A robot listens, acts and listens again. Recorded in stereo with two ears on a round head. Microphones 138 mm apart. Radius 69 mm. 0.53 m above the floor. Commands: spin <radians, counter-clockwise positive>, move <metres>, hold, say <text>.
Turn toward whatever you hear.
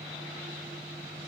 hold
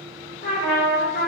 spin 0.96
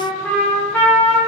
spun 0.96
spin 0.17
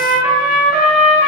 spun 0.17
say Facing the trumpet, 1 to 2 m away.